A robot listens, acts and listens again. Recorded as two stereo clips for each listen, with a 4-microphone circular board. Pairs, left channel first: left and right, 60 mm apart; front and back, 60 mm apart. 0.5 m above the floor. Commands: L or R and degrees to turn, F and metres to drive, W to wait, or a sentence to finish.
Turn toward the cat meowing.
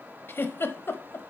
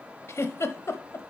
W
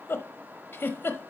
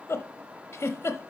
W
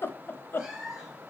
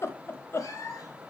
Facing the cat meowing.